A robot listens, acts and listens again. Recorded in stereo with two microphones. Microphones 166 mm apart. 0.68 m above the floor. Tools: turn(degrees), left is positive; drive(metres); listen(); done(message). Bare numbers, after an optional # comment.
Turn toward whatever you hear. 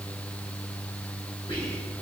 # The whispering: about 35° left or 145° left.
turn(35)
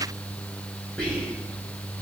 done("Facing the whispering.")